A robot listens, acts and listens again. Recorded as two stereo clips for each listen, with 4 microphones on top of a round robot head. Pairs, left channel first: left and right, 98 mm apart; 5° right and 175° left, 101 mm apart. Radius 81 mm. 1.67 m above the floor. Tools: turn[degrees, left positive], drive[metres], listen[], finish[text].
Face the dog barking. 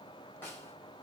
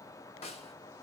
Action: listen[]
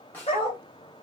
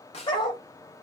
Thought: The dog barking: 35° left.
Action: turn[35]
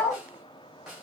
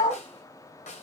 Thought: The dog barking is now 10° left.
Action: turn[10]
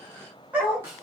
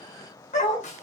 Thought: The dog barking is now 10° right.
Action: turn[-10]
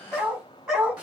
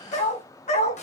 Action: finish[Found it: a dog barking, straight ahead, over 4 m away.]